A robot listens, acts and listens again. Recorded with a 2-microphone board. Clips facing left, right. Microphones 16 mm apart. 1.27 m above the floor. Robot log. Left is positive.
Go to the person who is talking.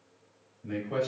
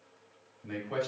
note: The man speaking: about 20° right or 160° right.
cmd yaw -20
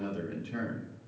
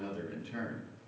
cmd fwd 1.0
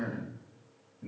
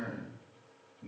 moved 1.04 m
cmd fwd 1.0
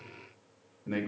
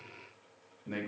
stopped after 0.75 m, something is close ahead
end: I am next to the man speaking.